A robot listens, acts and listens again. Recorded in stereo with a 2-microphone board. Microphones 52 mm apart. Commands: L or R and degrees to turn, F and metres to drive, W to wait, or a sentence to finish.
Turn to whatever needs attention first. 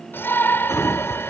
L45
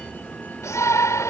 L85
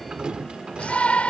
L25
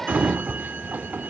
Found it: a shout, straight ahead.